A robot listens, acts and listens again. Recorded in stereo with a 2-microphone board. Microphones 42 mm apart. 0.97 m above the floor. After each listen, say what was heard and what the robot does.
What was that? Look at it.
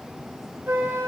The flute: about 65° right or 115° right. Turn 65° right.
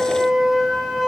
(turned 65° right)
So it is at 10° right. Turn 10° right.
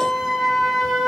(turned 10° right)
Found it: a flute, straight ahead.